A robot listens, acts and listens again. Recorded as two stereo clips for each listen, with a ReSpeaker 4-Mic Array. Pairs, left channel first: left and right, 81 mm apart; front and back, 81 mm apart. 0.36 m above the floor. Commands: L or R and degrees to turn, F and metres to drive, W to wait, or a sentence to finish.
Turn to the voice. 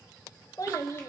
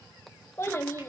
L50
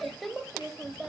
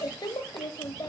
Found it: a child speaking, straight ahead, under 1 m away.